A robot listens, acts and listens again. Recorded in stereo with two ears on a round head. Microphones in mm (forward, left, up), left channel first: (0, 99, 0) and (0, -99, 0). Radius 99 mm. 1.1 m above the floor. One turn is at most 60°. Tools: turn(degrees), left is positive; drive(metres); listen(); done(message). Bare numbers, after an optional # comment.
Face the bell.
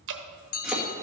# The bell: about 70° left or 110° left.
turn(60)
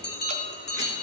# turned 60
# So it is at 50° left.
turn(50)
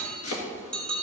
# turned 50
done("Found it: a bell, straight ahead.")